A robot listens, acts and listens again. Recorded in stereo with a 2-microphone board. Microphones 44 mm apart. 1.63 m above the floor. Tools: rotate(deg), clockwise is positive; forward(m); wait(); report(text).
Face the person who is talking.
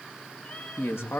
rotate(-90)
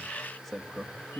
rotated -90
report("Found it: a man speaking, straight ahead, 2 to 4 m away.")